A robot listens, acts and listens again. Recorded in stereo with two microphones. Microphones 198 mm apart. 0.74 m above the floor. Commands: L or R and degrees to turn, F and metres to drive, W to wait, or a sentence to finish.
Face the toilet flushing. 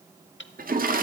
R45
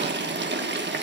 R80
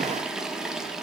Facing the toilet flushing, 1 to 2 m away.